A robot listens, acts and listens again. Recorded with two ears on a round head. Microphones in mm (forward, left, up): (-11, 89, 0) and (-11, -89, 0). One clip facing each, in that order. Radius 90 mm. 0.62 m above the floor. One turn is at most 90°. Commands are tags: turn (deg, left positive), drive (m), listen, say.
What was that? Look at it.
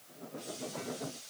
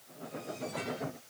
<listen/>
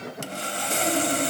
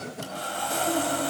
<turn deg="30"/>
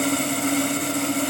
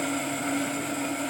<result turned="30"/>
<turn deg="90"/>
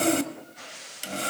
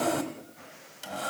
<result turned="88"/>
<turn deg="30"/>
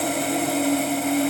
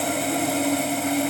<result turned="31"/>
<say>Facing the sawing.</say>